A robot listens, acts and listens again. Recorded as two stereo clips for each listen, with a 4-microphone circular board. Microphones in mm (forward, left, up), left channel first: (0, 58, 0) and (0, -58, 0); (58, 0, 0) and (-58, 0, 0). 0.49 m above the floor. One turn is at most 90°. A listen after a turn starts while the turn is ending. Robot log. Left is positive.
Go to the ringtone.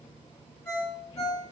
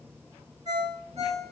note: The ringtone: 155° left.
cmd yaw +90
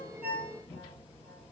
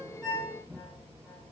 note: Nothing new. It was at 65° left.
cmd yaw +65
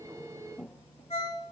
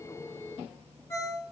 note: The ringtone is now 60° left.
cmd yaw +60
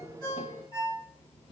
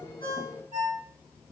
note: The ringtone is now 30° left.
cmd yaw +30
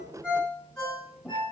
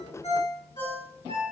note: The ringtone is now 10° left.
cmd yaw +10
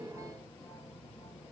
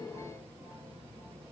cmd idle
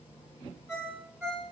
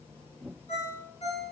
cmd fwd 1.0
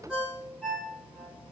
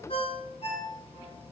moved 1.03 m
note: The ringtone is now 10° right.
cmd yaw -10
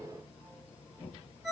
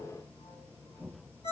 cmd fwd 1.0
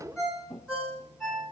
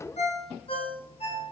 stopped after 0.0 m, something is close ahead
end: I am next to the ringtone.